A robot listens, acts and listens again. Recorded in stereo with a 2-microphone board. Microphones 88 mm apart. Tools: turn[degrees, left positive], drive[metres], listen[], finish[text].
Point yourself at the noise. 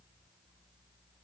Action: listen[]
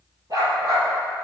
Thought: The dog barking: about 45° right or 135° right.
Action: turn[-45]
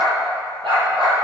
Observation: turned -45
Thought: So it is at 85° right.
Action: turn[-85]
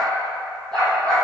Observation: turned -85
Thought: The dog barking is now 10° left.
Action: turn[10]
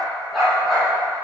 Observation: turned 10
Action: finish[Facing the dog barking, over 4 m away.]